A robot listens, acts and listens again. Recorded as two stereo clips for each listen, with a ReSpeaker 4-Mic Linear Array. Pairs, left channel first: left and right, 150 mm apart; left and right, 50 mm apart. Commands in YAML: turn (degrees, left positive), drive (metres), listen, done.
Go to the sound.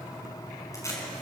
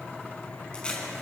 turn: 20
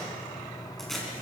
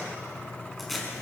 drive: 1.0
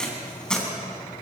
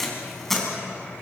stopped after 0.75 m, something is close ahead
done: "Something is in my way. I am facing the tape being pulled but have not reached it."